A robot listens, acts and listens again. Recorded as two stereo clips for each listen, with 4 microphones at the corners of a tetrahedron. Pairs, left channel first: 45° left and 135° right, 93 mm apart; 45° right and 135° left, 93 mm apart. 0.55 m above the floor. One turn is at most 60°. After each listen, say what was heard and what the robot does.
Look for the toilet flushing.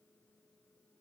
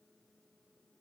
Keep listening.
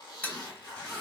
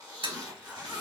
The toilet flushing: 115° left. Turn 60° left.
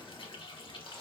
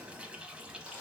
The toilet flushing is now 55° left. Turn 55° left.
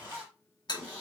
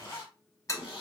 The toilet flushing is now 10° left. Turn 10° left.
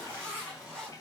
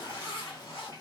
Found it: a toilet flushing, straight ahead.